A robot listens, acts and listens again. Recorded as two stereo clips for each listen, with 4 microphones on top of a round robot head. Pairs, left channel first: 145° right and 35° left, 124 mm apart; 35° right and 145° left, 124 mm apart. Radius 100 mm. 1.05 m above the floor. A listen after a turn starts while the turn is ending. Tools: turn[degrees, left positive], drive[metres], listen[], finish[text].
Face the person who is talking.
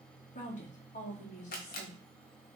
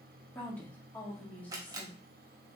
Thought: The woman speaking: 115° right.
Action: turn[-115]
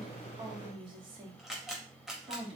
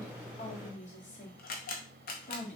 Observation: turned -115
Thought: The woman speaking is now 10° right.
Action: turn[-10]
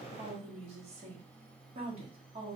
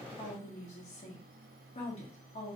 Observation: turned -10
Action: finish[Facing the woman speaking.]